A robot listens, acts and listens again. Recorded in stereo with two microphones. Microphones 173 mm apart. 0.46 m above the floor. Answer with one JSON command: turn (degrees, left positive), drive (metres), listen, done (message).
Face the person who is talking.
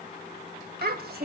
{"turn": -65}
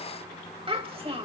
{"turn": -35}
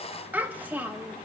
{"turn": -10}
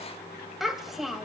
{"done": "Facing the child speaking."}